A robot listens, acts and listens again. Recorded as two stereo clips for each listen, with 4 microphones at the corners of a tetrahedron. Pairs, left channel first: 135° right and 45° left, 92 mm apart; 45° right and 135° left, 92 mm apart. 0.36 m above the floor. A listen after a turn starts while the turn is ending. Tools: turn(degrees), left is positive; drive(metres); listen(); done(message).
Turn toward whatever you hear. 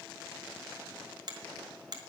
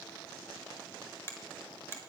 turn(degrees=15)
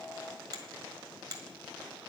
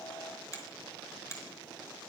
done("Found it: a finger snap, straight ahead.")